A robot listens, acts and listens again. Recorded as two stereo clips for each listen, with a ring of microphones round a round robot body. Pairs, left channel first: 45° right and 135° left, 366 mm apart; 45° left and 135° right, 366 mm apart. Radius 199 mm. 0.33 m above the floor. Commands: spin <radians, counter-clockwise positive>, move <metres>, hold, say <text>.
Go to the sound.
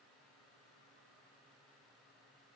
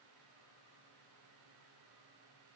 hold
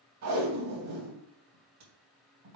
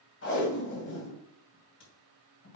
spin 1.75
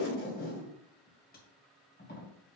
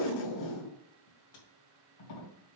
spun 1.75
spin 0.35
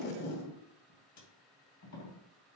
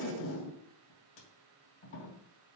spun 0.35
move 1.0
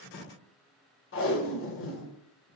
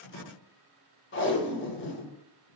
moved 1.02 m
move 1.0
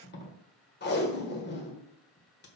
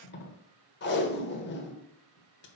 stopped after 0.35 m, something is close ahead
say Arrived at the tape being pulled, straight ahead.